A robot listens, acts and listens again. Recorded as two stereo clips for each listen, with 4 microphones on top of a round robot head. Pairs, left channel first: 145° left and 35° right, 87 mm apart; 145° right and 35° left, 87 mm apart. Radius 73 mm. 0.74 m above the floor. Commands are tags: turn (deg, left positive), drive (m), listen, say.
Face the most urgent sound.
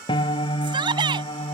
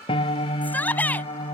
<turn deg="-70"/>
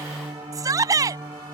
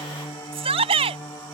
<turn deg="15"/>
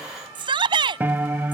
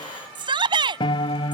<say>Facing the shout.</say>